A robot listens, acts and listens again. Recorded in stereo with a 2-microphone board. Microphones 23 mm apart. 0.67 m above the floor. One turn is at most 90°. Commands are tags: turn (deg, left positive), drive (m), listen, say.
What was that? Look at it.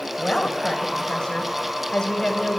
<turn deg="30"/>
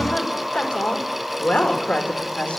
<turn deg="90"/>
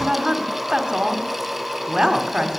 <turn deg="-35"/>
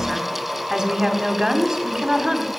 <turn deg="-25"/>
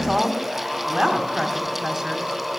<turn deg="-25"/>
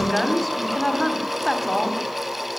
<say>Found it: a woman speaking, straight ahead, 2 to 4 m away.</say>